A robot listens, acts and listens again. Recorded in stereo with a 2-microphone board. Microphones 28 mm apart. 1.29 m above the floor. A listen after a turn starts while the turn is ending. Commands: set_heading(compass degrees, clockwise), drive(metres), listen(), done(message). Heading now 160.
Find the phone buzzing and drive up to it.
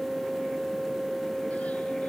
listen()
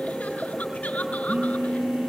set_heading(225)
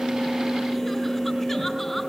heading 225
drive(1.0)
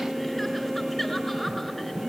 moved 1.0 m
listen()
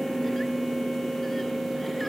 drive(1.0)
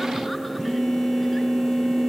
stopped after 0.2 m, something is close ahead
done("Blocked. The phone buzzing is further on, straight ahead.")